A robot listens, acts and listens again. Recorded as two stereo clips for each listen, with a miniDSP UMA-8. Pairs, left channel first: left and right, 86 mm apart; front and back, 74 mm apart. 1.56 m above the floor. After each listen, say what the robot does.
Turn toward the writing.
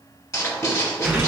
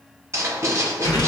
Turn 135° left.
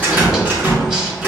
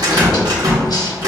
Turn 10° right.
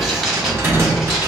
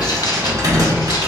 Facing the writing, under 1 m away.